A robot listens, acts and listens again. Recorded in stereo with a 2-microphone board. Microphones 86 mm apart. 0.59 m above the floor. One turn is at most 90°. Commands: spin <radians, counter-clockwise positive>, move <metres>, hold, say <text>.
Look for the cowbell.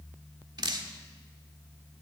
hold
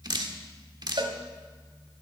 spin -1.22
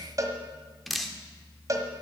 spin -0.70
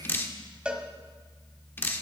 spin -0.17
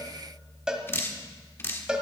spin -0.17
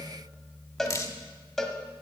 say Facing the cowbell.